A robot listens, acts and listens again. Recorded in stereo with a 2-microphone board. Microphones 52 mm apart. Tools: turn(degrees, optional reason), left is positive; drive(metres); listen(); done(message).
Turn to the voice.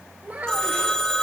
turn(degrees=-35, reason="The child speaking: about 35° right or 145° right.")
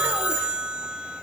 listen()
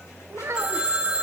turn(degrees=-110, reason="So it is at 110° right.")
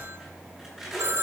listen()
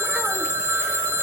listen()
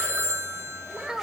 turn(degrees=-15, reason="The child speaking is now 15° right.")
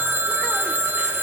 listen()
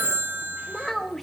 done("Found it: a child speaking, straight ahead, 1 to 2 m away.")